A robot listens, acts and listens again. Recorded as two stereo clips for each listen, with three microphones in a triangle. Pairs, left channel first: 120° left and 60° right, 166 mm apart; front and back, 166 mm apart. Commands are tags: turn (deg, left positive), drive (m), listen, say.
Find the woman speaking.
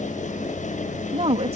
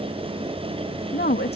<say>Found it: a woman speaking, straight ahead.</say>